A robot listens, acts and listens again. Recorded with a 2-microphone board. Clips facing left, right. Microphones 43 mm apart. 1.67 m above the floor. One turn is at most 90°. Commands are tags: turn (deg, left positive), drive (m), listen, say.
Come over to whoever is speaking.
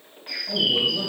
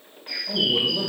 <turn deg="-30"/>
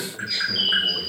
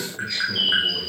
<turn deg="15"/>
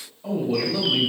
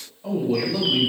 <drive m="1.0"/>
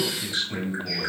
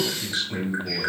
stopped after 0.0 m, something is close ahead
<say>Blocked. The man speaking is further on, straight ahead.</say>